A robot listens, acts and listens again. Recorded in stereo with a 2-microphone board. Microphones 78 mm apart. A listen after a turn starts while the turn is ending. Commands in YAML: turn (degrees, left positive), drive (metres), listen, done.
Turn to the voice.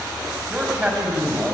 turn: -15
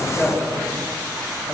done: "Found it: a man speaking, straight ahead, over 4 m away."